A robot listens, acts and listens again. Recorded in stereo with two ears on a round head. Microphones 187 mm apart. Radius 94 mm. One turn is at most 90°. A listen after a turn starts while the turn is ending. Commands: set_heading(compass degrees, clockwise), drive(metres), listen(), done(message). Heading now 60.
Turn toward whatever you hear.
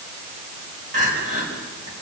set_heading(95)
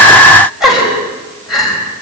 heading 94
done("Facing the crying.")